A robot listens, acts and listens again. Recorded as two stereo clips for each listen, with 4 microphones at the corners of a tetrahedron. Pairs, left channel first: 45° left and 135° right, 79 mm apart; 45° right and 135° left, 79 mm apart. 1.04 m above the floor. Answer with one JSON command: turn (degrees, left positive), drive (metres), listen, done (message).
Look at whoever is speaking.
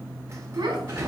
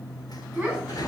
{"turn": -145}
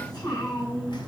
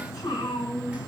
{"done": "Facing the child speaking, over 4 m away."}